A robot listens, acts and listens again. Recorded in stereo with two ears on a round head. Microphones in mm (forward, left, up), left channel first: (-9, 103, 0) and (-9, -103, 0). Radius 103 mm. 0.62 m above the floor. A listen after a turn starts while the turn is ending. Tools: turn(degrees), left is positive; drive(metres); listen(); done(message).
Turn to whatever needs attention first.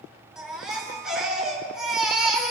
turn(degrees=-30)
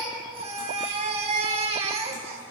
turn(degrees=-150)
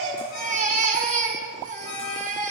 turn(degrees=-35)
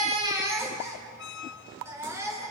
turn(degrees=-10)
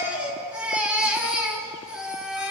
done("Facing the baby crying.")